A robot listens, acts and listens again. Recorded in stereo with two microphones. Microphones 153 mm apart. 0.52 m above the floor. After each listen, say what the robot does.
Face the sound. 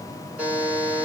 Turn 30° right.
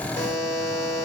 Turn 20° left.
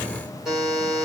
Found it: a buzzer, straight ahead.